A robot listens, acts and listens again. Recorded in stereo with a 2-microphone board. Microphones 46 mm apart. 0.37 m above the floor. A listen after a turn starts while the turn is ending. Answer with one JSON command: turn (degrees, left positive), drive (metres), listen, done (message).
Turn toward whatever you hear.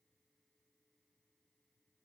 {"listen": true}
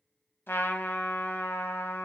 {"turn": 60}
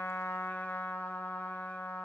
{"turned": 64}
{"turn": 55}
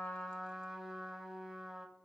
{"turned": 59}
{"done": "Facing the trumpet."}